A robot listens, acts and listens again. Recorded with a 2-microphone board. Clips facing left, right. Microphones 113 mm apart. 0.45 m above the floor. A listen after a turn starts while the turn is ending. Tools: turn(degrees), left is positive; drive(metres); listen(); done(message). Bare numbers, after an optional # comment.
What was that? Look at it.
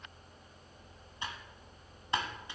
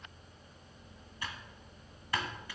# The typing on a keyboard: about 20° left or 160° left.
turn(20)
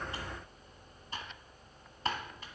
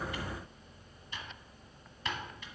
# So it is at 140° left.
turn(140)
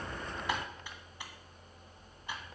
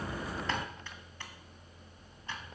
# The typing on a keyboard is now 15° left.
turn(15)
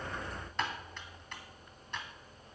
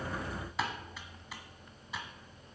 done("Facing the typing on a keyboard.")